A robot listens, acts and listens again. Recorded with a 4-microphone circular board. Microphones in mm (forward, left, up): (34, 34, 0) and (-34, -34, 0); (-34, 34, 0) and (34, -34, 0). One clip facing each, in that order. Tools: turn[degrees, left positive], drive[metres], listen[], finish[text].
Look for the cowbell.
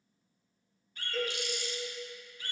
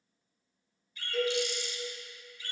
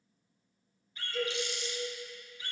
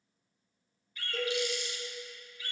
Thought: The cowbell: 55° right.
Action: turn[-55]
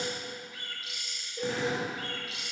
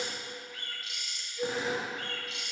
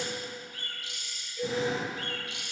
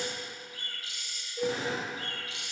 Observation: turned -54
Action: finish[Found it: a cowbell, straight ahead.]